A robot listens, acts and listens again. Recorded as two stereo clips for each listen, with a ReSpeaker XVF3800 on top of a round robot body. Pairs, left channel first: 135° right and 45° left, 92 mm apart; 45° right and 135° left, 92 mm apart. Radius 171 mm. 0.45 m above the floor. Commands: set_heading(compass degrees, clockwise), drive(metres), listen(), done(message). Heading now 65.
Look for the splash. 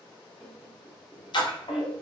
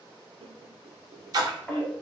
set_heading(240)
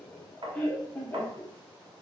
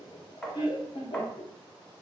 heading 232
set_heading(242)
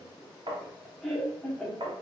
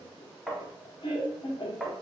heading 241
done("Facing where the splash came from. I can't hear it now.")